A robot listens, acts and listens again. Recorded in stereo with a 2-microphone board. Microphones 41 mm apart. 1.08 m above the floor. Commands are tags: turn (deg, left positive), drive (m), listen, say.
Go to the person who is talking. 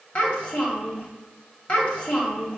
<turn deg="25"/>
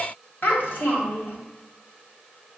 <turn deg="130"/>
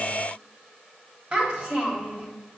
<turn deg="-25"/>
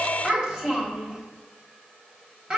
<turn deg="-15"/>
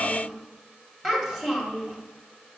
<drive m="1.0"/>
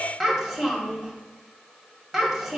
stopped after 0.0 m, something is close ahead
<say>Something is in my way. I am facing the child speaking but have not reached it.</say>